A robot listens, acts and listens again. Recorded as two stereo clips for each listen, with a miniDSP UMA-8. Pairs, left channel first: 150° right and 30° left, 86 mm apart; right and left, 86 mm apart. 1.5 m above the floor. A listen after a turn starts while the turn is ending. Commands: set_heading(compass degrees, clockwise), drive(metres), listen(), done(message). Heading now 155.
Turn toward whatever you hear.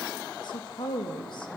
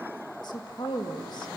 set_heading(275)
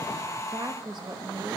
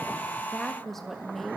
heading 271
done("Found it: a woman speaking, straight ahead.")